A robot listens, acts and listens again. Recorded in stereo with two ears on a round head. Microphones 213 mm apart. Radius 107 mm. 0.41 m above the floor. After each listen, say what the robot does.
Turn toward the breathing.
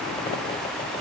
Keep listening.
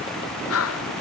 Turn 70° left.
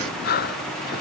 Turn 40° left.
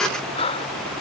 Turn 25° left.
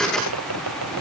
Keep listening.
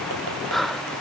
Facing the breathing.